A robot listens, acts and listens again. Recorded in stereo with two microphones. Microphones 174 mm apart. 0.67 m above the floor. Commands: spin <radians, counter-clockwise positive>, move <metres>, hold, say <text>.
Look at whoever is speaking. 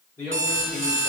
spin 0.61
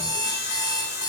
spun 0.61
hold
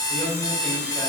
spin 0.17
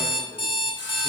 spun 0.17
hold
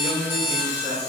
say Facing the man speaking, 1 to 2 m away.